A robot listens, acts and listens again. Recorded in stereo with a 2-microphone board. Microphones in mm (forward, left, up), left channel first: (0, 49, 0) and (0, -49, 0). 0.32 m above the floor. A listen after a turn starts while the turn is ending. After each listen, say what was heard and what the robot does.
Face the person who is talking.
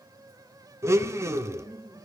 Turn 30° left.
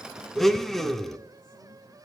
Keep listening.
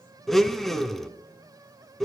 Keep listening.
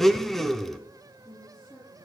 So it is at 140° left. Turn 140° left.
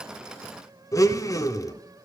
Keep listening.
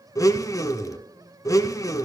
Keep listening.
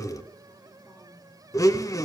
Facing where the woman speaking came from. I can't hear it now.